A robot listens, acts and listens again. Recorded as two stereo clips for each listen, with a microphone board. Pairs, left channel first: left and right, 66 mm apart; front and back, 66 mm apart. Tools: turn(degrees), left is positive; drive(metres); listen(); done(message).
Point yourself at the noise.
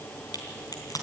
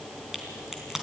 turn(degrees=95)
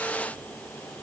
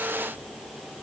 done("I heard a crack from this way, but can't make it out now.")